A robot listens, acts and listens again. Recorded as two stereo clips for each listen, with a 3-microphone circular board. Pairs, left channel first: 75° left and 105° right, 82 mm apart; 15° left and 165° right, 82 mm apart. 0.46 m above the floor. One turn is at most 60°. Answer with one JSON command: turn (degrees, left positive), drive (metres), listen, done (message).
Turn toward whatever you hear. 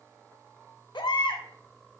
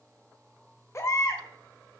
{"turn": 60}
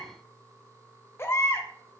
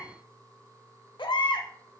{"turn": 20}
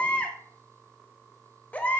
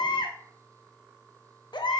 {"done": "Found it: a baby crying, straight ahead."}